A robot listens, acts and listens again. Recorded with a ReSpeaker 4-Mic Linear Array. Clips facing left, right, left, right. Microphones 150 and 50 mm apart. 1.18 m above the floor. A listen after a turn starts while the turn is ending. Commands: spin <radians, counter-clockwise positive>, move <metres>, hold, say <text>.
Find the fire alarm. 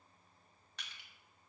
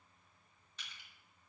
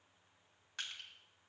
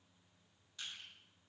hold
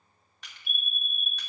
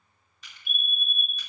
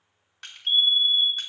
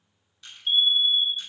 spin -0.52
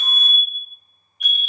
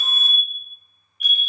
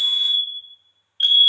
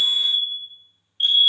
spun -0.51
spin 0.44
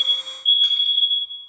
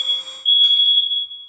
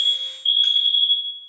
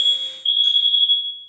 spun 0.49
say Found it: a fire alarm, straight ahead.